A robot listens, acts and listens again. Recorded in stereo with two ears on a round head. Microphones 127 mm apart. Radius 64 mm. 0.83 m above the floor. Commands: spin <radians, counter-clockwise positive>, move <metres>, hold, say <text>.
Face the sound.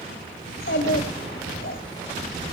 spin 1.57
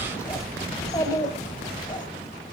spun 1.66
spin 0.52
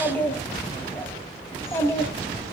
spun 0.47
spin 0.35
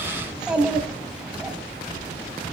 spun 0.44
say Found it: a child speaking, straight ahead.